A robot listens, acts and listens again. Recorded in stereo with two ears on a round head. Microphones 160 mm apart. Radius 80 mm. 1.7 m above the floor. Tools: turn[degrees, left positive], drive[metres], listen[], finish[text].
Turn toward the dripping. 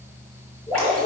Action: turn[30]
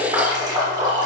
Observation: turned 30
Thought: So it is at 25° right.
Action: turn[-25]
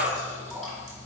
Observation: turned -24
Action: finish[Found it: dripping, straight ahead.]